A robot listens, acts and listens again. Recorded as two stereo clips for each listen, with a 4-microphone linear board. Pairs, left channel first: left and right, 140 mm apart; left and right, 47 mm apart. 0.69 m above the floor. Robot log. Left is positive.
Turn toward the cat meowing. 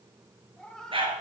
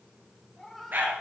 cmd yaw +30
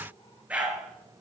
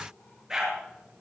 cmd idle
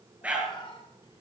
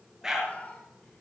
note: So it is at 145° left.
cmd yaw +145
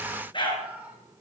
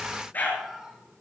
note: The cat meowing is now 10° right.
cmd yaw -10
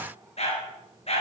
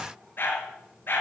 cmd idle
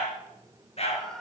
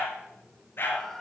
end: Found it: a cat meowing, straight ahead.